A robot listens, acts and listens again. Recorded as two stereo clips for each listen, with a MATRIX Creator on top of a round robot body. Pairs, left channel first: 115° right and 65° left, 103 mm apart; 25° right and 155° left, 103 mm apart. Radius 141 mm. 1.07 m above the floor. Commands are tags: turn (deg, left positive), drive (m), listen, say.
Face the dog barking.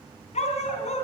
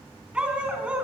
<turn deg="-120"/>
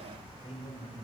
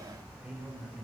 <listen/>
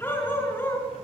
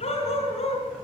<turn deg="-40"/>
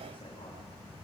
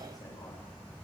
<listen/>
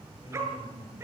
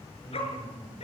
<say>Found it: a dog barking, straight ahead, over 4 m away.</say>